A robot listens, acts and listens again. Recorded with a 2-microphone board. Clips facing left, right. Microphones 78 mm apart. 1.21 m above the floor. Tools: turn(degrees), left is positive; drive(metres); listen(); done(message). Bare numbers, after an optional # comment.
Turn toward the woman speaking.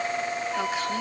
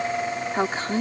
# The woman speaking: about 35° right or 145° right.
turn(-35)
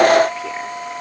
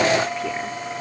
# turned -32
listen()
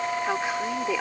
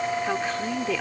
# So it is at 15° left.
turn(15)
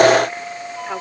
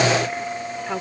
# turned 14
listen()
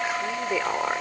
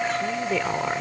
# The woman speaking is now 10° left.
turn(10)
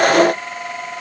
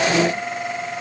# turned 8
listen()
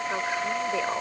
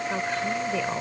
listen()
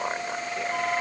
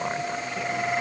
done("I heard a woman speaking from this way, but can't make it out now.")